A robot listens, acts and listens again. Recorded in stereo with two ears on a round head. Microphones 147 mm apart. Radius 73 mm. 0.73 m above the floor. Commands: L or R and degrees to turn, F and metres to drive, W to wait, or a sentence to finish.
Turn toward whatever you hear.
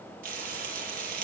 R60
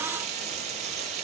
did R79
R45
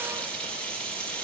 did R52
Facing the frying.